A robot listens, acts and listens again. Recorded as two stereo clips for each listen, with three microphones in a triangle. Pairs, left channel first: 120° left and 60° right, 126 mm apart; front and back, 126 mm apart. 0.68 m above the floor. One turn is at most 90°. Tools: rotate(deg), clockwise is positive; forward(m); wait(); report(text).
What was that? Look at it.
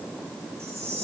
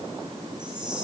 wait()
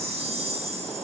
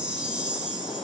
rotate(90)
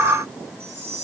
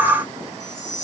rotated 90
rotate(20)
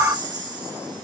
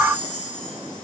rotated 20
report("Facing the chime.")